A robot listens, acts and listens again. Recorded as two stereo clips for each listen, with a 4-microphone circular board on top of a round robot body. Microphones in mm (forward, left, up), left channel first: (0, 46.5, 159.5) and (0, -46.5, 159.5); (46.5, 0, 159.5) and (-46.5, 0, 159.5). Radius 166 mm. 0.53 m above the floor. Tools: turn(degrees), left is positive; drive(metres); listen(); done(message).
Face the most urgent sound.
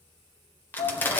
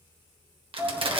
turn(degrees=90)
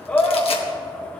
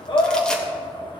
turn(degrees=15)
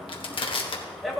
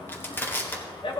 done("Facing the shout, 1 to 2 m away.")